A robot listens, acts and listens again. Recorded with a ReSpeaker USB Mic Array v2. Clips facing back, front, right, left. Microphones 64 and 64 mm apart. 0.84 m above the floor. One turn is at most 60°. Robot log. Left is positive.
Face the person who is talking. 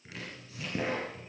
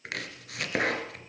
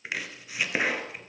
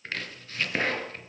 cmd idle
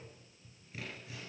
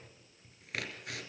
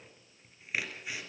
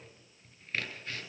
cmd idle
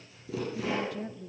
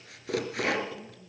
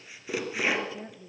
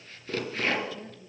note: The woman speaking: 155° right.
cmd yaw -60
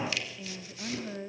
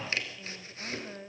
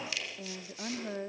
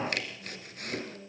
note: The woman speaking is now 90° right.
cmd yaw -60
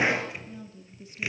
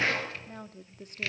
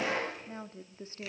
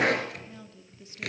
note: The woman speaking is now 35° right.
cmd yaw -35
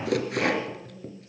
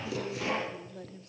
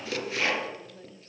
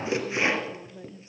note: The woman speaking is now 15° left.
cmd yaw +15
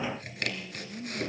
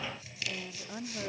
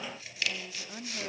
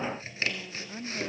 end: Facing the woman speaking.